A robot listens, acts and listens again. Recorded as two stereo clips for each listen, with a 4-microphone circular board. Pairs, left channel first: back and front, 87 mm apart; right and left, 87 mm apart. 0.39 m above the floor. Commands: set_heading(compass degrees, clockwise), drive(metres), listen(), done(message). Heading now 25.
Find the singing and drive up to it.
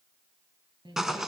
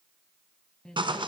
set_heading(35)
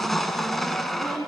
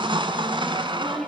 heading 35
drive(1.0)
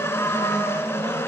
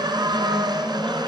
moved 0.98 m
listen()
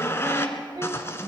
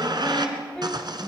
set_heading(50)
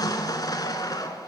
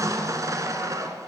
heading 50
listen()
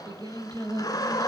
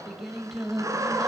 drive(1.0)
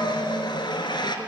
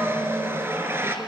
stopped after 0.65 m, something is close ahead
listen()
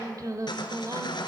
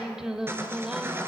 set_heading(40)
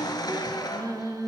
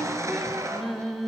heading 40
done("Arrived at the singing, straight ahead.")